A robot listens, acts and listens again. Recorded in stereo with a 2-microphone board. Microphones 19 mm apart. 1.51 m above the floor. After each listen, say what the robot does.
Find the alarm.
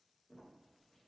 Keep listening.
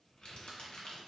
Keep listening.
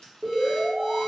Turn 30° right.
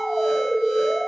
Turn 150° right.
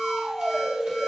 Turn 10° left.
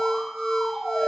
Facing the alarm.